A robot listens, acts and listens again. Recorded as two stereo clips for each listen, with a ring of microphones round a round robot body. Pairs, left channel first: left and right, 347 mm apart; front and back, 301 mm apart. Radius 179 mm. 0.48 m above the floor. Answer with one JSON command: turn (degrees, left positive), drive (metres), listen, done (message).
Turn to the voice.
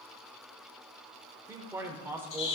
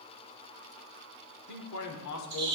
{"turn": -10}
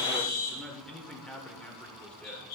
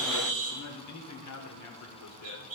{"done": "Found it: a man speaking, straight ahead."}